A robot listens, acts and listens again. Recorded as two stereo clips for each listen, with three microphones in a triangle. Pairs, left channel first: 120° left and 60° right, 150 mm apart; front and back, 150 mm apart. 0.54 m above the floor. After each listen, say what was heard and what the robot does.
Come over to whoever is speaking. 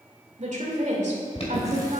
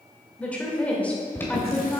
The woman speaking: 80° right. Turn 80° right.
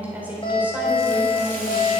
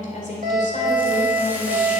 The woman speaking is now 20° left. Turn 20° left.
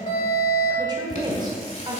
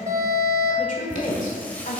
Drive 1.0 m forward.
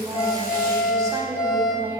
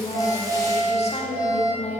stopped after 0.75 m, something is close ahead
Arrived at the woman speaking, straight ahead.